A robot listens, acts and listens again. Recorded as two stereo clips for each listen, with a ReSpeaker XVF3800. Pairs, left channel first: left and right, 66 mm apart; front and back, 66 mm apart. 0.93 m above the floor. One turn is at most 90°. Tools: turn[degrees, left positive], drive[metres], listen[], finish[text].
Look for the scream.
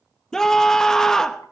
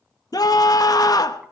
Thought: The scream: 10° left.
Action: turn[10]
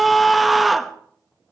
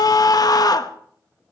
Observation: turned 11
Action: finish[Found it: a scream, straight ahead.]